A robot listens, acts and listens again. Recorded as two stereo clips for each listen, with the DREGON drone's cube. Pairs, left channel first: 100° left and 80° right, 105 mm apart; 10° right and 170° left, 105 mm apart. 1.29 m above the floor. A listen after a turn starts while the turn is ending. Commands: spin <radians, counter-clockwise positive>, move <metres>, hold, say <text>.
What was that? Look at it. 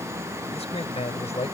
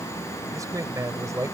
spin 1.92
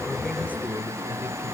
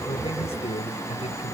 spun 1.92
hold
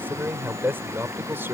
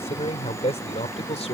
spin -0.17
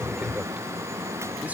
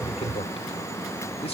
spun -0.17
say Facing the man speaking.